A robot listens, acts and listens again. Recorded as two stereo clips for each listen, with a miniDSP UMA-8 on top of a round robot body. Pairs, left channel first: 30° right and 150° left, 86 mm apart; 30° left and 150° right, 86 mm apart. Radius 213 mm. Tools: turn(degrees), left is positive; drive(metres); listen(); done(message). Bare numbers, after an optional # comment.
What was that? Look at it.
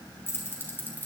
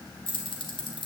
# The keys jangling: 40° left.
turn(40)
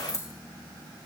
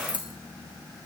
# The keys jangling is now 25° left.
turn(25)
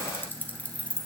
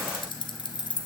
# The keys jangling is now 45° left.
turn(45)
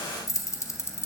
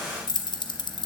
# The keys jangling is now 30° left.
turn(30)
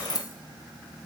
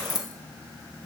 done("Facing the keys jangling.")